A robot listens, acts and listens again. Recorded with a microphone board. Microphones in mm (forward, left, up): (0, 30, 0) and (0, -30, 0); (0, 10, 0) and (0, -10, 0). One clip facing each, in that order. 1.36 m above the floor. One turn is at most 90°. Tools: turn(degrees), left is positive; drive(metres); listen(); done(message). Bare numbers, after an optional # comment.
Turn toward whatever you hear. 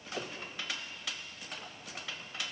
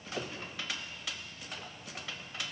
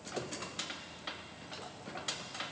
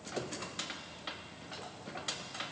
listen()
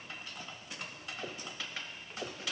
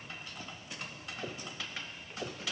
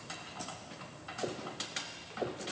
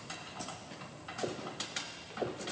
listen()
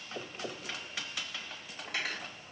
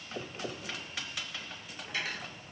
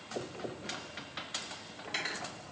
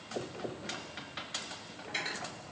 # The cutlery clinking: about 65° left or 115° left.
turn(65)
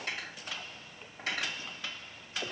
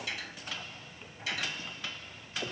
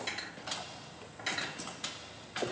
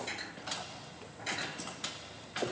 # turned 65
# So it is at 40° left.
turn(40)
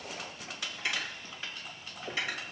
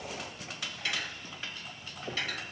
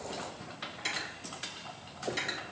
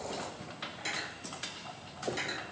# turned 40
# The cutlery clinking is now 15° left.
turn(15)
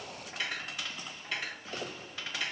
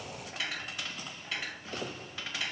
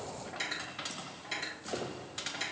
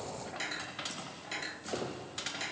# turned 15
done("Facing the cutlery clinking.")